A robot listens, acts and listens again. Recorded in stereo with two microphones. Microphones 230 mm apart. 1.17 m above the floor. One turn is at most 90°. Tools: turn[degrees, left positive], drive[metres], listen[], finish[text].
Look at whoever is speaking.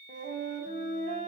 Action: listen[]
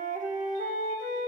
Action: listen[]
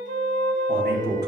Thought: The man speaking: about 45° right or 135° right.
Action: turn[-45]
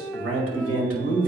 Thought: So it is at 90° right.
Action: turn[-90]
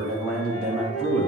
Action: finish[Found it: a man speaking, straight ahead.]